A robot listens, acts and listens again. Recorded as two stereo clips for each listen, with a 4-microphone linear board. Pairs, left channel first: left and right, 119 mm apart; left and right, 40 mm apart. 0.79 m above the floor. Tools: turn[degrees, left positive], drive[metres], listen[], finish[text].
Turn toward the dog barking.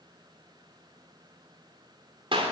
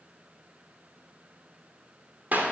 Action: listen[]
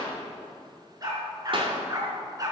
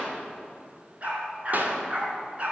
Thought: The dog barking: about 35° right or 145° right.
Action: turn[-35]
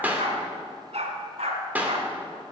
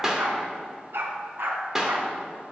Thought: So it is at 115° right.
Action: turn[-115]
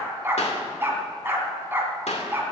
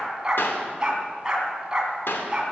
Thought: The dog barking is now 20° right.
Action: turn[-20]
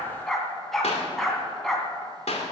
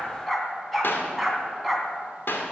Action: finish[Facing the dog barking.]